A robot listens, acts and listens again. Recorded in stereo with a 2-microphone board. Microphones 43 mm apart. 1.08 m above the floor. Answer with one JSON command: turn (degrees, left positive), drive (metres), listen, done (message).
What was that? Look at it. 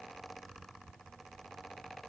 {"listen": true}
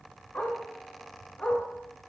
{"turn": 35}
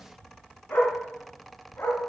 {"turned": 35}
{"turn": 120}
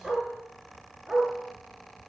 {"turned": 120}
{"turn": -15}
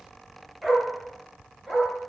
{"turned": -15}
{"done": "Found it: a dog barking, straight ahead."}